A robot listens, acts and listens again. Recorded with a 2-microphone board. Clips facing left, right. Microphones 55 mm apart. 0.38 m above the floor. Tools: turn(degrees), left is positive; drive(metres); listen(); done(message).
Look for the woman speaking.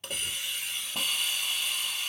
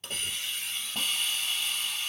listen()
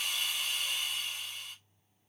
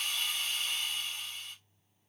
listen()
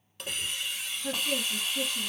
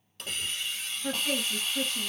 turn(degrees=-60)
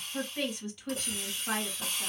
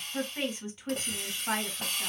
turn(degrees=-30)
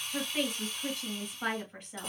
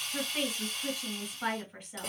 done("Found it: a woman speaking, straight ahead.")